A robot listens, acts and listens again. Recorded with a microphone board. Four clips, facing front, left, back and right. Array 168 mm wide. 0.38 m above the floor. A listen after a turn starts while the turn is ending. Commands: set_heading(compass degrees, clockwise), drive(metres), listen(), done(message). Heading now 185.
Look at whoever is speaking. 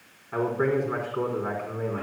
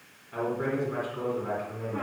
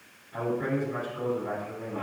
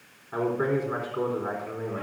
set_heading(220)
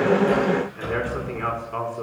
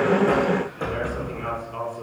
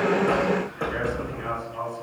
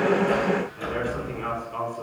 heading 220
set_heading(230)
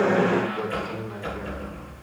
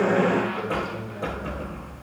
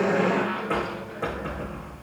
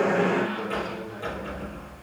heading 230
listen()
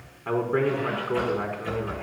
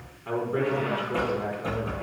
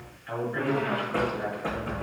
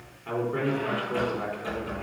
done("Found it: a man speaking, straight ahead.")